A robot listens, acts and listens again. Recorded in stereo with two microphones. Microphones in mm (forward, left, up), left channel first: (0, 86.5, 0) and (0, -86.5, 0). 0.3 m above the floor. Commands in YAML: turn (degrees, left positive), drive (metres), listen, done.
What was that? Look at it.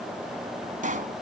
turn: -50
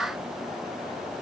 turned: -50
listen: true
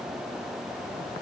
done: "I heard a pop, but can't make it out now. It was about straight ahead or 80° right."